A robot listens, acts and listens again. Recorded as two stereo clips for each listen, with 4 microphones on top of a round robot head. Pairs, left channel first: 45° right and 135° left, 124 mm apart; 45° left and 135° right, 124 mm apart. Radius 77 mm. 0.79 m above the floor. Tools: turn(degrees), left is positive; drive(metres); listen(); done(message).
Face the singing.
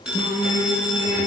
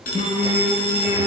turn(degrees=10)
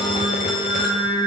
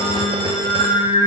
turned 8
done("Found it: singing, straight ahead, over 4 m away.")